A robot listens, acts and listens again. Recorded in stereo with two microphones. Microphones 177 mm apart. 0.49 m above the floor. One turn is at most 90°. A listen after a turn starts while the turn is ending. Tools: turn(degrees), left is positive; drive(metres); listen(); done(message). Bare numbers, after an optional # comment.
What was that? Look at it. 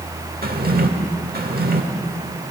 # The drawer: about 60° right or 120° right.
turn(-60)
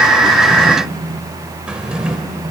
done("Facing the drawer, 1 to 2 m away.")